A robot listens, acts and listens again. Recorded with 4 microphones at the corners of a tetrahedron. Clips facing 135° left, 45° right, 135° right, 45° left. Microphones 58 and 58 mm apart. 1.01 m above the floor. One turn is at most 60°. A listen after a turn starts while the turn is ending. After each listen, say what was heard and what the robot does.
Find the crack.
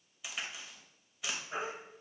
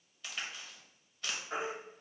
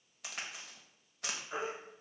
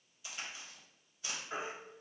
The crack: 145° right. Turn 60° right.
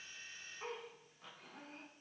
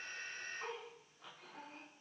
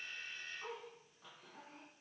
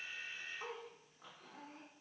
Nothing new. It was at 85° right. Turn 60° right.
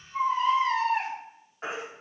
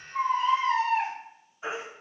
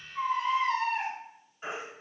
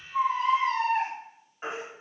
Nothing new. It was at 25° right. Turn 25° right.
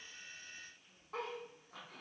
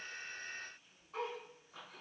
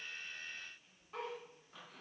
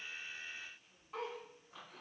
Facing where the crack came from. I can't hear it now.